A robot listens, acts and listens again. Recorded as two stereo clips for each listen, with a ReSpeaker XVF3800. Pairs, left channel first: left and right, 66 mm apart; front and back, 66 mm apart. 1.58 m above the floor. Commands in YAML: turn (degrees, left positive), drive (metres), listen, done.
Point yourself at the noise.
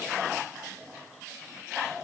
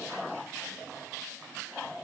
listen: true
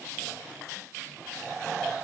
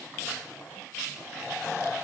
listen: true
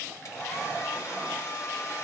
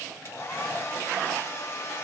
turn: 50
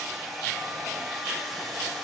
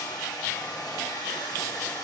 done: "Facing the hair dryer."